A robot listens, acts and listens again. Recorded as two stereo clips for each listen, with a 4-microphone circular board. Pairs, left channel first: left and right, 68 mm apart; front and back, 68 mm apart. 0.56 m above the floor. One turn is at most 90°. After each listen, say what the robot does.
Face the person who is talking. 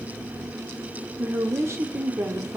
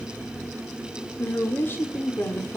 Turn 50° right.
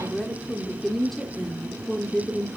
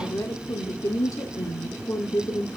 Found it: a woman speaking, straight ahead, 1 to 2 m away.